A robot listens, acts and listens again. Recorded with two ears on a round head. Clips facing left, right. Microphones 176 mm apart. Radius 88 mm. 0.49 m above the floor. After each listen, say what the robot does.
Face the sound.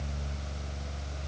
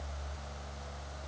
Keep listening.
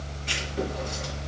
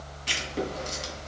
Turn 50° right.
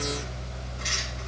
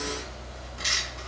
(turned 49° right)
Turn 80° right.
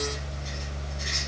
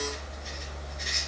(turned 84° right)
Found it: writing, straight ahead.